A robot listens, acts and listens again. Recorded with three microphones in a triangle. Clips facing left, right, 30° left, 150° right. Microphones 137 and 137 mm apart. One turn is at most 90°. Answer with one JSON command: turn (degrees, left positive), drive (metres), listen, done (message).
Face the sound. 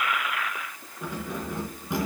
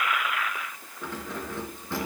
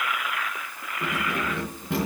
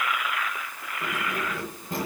{"turn": 15}
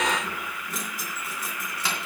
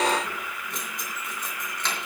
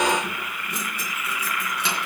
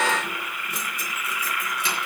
{"turn": 10}
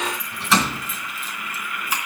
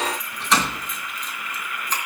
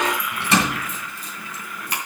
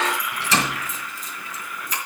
{"turn": 10}
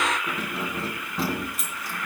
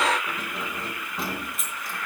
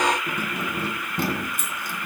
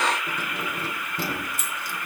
{"done": "Found it: keys jangling, straight ahead."}